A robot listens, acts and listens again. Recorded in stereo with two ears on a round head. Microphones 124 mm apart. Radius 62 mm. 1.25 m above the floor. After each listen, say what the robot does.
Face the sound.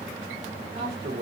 Turn 90° right.
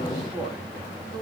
Turn 10° right.
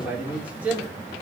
Turn 15° right.
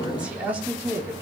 Turn 15° right.
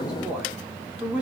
Turn 10° right.
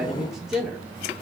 Facing the man speaking.